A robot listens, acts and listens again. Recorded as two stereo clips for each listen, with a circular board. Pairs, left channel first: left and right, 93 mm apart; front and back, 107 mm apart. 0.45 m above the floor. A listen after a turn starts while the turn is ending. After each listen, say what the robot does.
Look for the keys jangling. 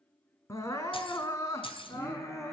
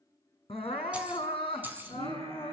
Turn 110° left.
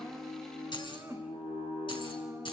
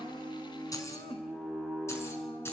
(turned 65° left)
Turn 65° left.
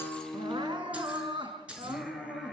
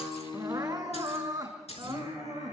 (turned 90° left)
Turn 15° right.
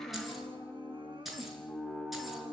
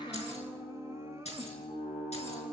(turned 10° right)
Found it: keys jangling, straight ahead.